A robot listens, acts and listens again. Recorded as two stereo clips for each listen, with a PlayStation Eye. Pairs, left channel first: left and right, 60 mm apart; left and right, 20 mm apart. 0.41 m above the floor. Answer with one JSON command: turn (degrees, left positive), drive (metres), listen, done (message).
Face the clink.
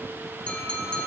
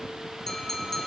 {"turn": 20}
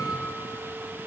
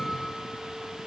{"listen": true}
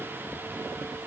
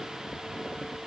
{"listen": true}
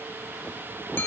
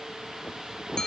{"turn": 135}
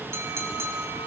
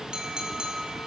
{"turn": -55}
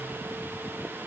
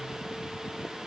{"listen": true}
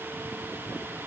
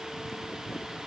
{"listen": true}
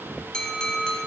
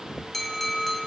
{"turn": 15}
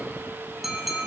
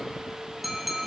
{"done": "Found it: a clink, straight ahead, 2 to 4 m away."}